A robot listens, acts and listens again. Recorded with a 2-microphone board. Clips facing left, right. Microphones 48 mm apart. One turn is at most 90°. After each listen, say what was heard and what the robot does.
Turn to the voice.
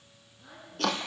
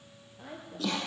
The woman speaking: about 60° right or 120° right. Turn 60° right.
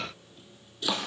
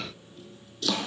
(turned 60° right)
Keep listening.
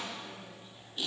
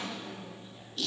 Keep listening.
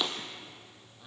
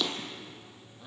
Facing the woman speaking.